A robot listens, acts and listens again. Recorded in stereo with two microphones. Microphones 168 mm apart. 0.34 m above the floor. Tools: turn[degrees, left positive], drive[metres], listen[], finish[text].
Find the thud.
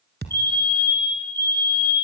Action: turn[-90]
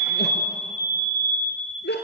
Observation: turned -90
Action: finish[Facing where the thud came from. I can't hear it now.]